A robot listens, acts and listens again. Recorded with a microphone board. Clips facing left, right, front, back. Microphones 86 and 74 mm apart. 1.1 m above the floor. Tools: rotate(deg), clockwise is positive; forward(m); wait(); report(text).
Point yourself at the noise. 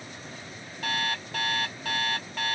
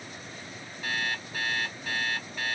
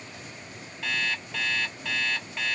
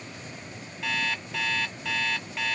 rotate(-90)
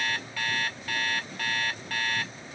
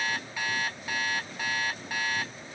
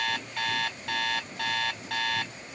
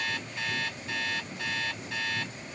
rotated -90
rotate(15)
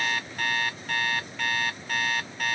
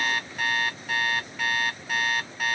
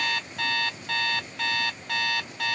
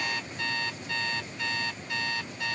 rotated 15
report("Found it: an alarm clock, straight ahead.")